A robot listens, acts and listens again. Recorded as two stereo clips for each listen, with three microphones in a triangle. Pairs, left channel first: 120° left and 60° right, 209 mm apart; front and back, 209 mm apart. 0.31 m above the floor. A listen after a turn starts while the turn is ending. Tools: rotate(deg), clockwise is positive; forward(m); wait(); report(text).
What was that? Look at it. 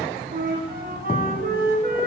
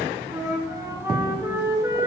rotate(105)
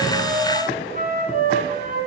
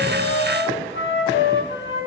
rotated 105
rotate(15)
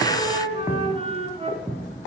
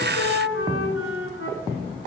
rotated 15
report("Found it: a flute, straight ahead, 1 to 2 m away.")